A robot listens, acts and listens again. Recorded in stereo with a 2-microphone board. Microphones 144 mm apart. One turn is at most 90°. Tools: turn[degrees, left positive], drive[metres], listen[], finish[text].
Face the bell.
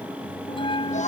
Thought: The bell: about 35° left or 145° left.
Action: turn[35]
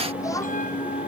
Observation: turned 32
Thought: So it is at 110° left.
Action: turn[90]
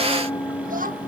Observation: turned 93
Thought: The bell is now 20° left.
Action: turn[20]
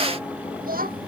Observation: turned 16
Action: listen[]
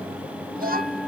Action: listen[]
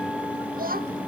Action: finish[Facing where the bell came from. I can't hear it now.]